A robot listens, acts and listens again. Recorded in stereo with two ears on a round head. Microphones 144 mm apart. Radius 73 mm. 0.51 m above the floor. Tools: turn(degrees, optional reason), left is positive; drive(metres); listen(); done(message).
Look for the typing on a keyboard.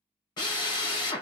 listen()
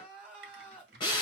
turn(degrees=-70, reason="The typing on a keyboard: about 70° right or 110° right.")
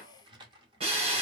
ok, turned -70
turn(degrees=-30, reason="So it is at 30° right.")
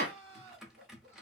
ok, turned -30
done("Facing the typing on a keyboard.")